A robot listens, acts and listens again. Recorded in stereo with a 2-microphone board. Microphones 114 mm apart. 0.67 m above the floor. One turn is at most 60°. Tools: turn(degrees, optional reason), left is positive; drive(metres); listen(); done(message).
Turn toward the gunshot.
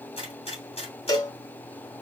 turn(degrees=60, reason="The gunshot: about 60° left or 120° left.")
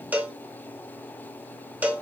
listen()
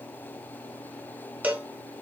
done("I heard a gunshot, but can't make it out now. It was about straight ahead or 60° left.")